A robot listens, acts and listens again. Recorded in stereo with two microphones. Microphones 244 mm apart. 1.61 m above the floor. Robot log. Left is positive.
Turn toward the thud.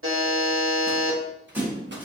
cmd yaw -30
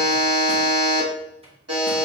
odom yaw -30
cmd idle
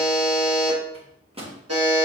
end: I heard a thud, but can't make it out now. It was about 20° left or 140° right.